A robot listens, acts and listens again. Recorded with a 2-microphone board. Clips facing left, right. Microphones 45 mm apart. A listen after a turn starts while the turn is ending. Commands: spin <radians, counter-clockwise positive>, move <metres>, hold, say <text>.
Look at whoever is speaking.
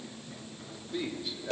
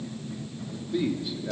spin 0.52
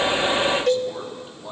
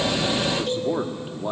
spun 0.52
spin -0.52
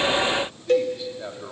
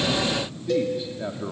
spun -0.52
say Facing the man speaking.